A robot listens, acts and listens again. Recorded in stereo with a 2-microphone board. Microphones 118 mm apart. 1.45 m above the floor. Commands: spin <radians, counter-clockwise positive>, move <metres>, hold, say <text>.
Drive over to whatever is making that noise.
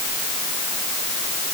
hold
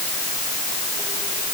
hold
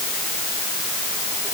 say I can't make out anything.